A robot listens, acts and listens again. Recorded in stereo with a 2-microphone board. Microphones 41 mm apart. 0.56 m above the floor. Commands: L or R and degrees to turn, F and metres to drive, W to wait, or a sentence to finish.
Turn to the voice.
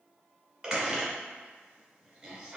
W
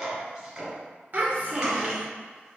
R45
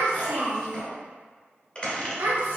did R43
R85
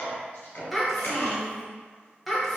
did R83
Facing the child speaking.